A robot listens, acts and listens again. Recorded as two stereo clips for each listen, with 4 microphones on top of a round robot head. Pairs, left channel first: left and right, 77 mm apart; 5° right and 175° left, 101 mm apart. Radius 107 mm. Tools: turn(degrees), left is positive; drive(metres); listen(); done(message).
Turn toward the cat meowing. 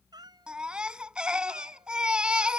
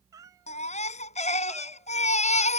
turn(degrees=-120)
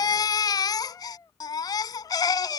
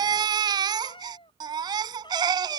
turn(degrees=40)
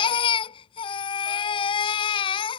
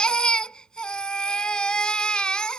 listen()
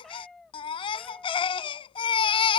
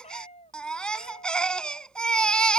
done("Facing the cat meowing.")